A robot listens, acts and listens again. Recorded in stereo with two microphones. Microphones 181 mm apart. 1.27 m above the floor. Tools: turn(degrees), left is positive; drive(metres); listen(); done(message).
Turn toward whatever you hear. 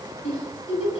turn(degrees=35)
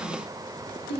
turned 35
turn(degrees=110)
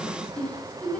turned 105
done("Found it: a giggle, straight ahead, over 4 m away.")